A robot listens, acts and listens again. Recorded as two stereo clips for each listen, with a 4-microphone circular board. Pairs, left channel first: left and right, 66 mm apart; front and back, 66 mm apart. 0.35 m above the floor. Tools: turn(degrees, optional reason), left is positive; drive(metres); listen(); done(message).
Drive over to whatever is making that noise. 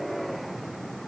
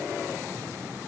listen()
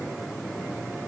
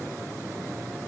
listen()
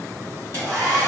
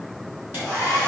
turn(degrees=-130, reason="The hair dryer: 130° right.")
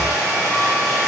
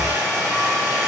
turn(degrees=-25, reason="The hair dryer is now 25° right.")
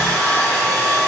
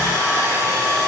drive(metres=1.0)
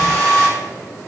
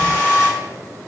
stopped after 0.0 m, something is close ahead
done("Something is in my way. I am facing the hair dryer but have not reached it.")